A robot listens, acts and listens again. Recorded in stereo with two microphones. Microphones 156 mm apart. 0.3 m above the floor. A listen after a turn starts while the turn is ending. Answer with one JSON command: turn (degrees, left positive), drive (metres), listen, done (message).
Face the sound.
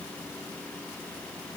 {"listen": true}
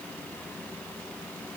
{"listen": true}
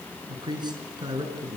{"turn": -25}
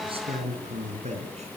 {"turn": -135}
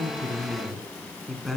{"done": "Found it: a man speaking, straight ahead."}